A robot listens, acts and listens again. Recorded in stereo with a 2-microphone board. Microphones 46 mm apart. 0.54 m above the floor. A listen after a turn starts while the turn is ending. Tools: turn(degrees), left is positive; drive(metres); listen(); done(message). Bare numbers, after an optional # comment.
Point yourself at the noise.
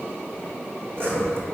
# The sawing: about 55° right or 125° right.
turn(-55)
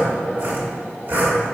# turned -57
# So it is at 60° right.
turn(-60)
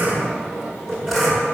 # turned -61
done("Facing the sawing, 1 to 2 m away.")